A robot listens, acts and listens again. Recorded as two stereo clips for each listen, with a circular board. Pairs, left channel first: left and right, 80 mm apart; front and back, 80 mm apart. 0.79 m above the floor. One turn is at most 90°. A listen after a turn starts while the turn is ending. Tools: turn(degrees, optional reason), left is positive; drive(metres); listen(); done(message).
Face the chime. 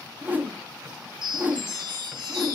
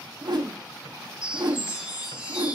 turn(degrees=-90, reason="The chime: 110° right.")
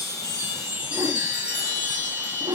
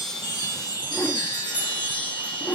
turn(degrees=-15, reason="The chime is now 15° right.")
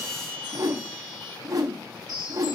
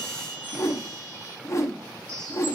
done("Facing the chime.")